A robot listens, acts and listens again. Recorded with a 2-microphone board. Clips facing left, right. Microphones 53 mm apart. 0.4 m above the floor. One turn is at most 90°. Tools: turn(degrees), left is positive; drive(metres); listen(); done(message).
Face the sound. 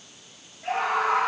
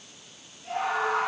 turn(degrees=90)
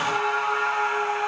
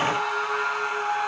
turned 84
turn(degrees=15)
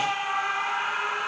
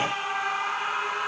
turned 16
done("Found it: a scream, straight ahead.")